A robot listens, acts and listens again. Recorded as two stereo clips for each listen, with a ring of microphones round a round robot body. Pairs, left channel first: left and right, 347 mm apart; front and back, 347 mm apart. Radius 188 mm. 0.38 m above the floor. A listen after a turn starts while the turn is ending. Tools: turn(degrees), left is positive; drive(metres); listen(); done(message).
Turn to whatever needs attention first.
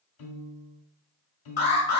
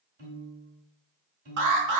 turn(degrees=150)
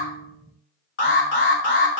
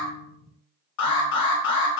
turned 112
turn(degrees=35)
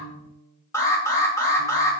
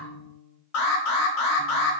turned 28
turn(degrees=10)
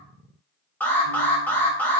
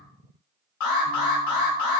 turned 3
done("Found it: an alarm, straight ahead, 1 to 2 m away.")